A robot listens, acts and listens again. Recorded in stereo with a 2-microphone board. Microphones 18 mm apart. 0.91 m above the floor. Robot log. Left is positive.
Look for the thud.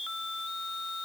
cmd idle
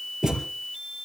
note: The thud: about 30° right or 150° right.
cmd yaw -30
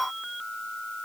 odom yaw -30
cmd idle
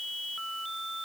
end: I heard a thud, but can't make it out now. It was about straight ahead or 120° right.